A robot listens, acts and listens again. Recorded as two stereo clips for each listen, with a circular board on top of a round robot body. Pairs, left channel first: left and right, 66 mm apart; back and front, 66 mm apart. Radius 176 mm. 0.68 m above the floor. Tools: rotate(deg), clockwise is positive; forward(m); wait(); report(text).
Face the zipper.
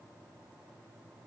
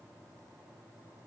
wait()
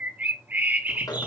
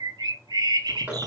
rotate(-65)
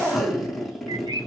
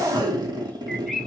report("Facing the zipper.")